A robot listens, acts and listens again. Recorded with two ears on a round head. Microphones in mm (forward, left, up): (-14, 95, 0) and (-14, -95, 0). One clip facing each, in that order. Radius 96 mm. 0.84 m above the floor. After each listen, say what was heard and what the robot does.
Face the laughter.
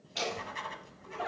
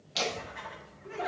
The laughter: about 60° right or 120° right. Turn 60° right.
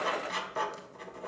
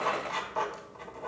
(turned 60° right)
Keep listening.
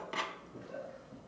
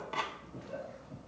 So it is at 50° right. Turn 50° right.
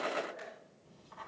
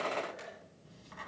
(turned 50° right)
Facing the laughter, 2 to 4 m away.